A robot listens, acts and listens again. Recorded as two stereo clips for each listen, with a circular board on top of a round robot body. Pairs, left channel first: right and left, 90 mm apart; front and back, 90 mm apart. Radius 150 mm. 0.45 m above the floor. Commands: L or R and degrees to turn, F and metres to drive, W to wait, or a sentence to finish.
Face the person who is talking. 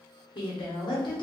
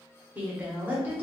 R110
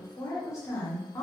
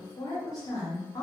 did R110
R40
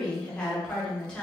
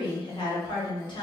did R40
R15
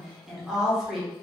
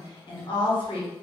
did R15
Found it: a woman speaking, straight ahead.